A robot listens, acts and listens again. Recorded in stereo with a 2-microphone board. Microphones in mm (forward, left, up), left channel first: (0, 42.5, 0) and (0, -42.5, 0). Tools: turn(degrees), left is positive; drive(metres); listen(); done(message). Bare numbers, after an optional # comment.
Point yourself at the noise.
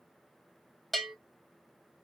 turn(30)
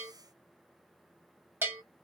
# So it is at 30° right.
turn(-30)
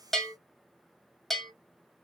done("Facing the bell.")